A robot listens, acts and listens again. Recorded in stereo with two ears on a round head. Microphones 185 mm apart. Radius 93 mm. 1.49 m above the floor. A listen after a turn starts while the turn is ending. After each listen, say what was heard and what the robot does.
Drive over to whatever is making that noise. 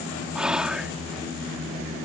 Turn 30° right.
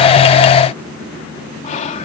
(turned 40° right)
So it is at 35° left. Turn 35° left.
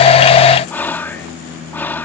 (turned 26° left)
The whispering is now 10° left. Turn 10° left.
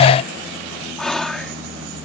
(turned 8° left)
Drive 1.0 m forward.
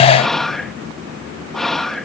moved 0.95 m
Drive 1.0 m forward.
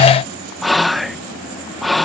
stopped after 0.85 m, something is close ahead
Arrived at the whispering, straight ahead.